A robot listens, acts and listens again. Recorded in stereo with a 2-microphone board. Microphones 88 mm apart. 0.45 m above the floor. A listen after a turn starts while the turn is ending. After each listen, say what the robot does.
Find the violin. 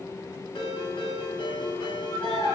Turn 45° left.
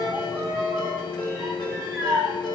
Facing the violin, over 4 m away.